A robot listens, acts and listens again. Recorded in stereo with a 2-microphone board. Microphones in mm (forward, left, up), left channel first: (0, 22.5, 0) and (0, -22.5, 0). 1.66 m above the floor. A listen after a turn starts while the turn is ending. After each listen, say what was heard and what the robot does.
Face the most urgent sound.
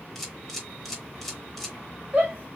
The shout: about 30° right or 150° right. Turn 30° right.
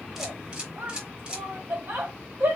So it is at 125° right. Turn 125° right.
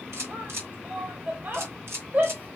The shout is now 45° right. Turn 45° right.
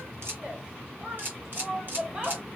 The shout is now 15° right. Turn 15° right.
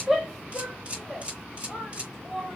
Facing the shout, 2 to 4 m away.